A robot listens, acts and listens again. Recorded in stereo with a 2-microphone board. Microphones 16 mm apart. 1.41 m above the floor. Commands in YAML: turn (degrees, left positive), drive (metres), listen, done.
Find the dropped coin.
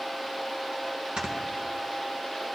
listen: true
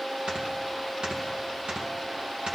listen: true
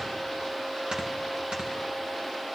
done: "I can't make out a dropped coin to turn to."